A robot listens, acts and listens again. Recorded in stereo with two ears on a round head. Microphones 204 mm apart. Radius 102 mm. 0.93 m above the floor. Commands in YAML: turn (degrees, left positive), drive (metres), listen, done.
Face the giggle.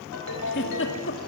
turn: 55
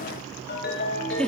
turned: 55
done: "Found it: a giggle, straight ahead."